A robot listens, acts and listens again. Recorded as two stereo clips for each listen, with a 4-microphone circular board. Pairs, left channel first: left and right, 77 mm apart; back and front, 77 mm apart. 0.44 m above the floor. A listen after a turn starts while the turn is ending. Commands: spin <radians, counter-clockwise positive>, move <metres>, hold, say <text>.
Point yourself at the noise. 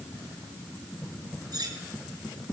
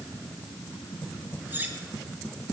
spin -1.13
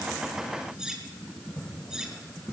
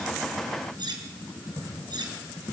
spin -0.17
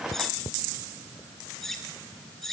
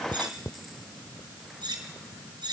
say Found it: cutlery clinking, straight ahead.